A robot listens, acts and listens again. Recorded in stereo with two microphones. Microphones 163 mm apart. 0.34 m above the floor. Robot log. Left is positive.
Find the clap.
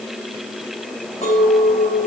cmd idle
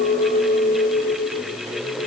cmd idle
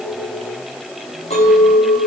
end: I can't make out a clap, only a clink.